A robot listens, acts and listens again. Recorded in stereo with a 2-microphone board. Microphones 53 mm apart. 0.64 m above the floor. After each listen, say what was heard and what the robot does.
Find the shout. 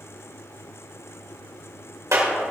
Keep listening.
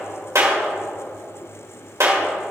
Keep listening.
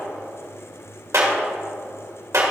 I can't make out a shout, only a clap.